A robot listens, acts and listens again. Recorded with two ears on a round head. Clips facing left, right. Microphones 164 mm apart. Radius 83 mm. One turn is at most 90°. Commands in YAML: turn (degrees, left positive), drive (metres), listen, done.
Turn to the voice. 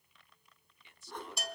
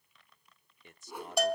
turn: -40
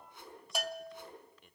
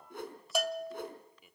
done: "Found it: a man speaking, straight ahead, under 1 m away."